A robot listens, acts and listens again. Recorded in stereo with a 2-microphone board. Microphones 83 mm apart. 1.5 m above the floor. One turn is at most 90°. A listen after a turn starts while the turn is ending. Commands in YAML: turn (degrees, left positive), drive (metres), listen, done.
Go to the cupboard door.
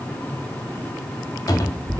turn: 45
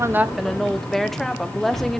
drive: 1.0
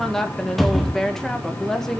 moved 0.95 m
drive: 1.0
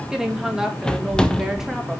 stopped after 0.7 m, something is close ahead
turn: 10
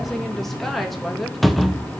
done: "Arrived at the cupboard door, straight ahead."